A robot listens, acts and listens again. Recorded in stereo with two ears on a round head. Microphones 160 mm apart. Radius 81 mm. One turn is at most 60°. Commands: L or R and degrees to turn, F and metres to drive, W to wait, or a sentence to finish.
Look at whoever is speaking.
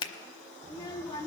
L20
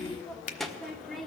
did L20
Facing the child speaking.